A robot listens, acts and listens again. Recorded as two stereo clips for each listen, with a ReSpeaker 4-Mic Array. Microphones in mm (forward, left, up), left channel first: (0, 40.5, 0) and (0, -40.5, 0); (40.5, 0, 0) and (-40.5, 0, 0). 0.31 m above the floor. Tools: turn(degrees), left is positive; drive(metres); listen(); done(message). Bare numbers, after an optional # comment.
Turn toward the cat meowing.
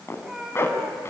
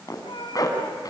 done("Found it: a cat meowing, straight ahead, 2 to 4 m away.")